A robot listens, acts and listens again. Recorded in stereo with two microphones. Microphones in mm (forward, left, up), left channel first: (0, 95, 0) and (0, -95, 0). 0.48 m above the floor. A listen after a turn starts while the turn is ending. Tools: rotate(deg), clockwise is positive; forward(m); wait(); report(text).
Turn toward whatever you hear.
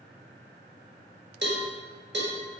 rotate(70)
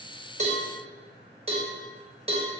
rotate(30)
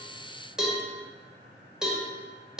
report("Found it: a cowbell, straight ahead.")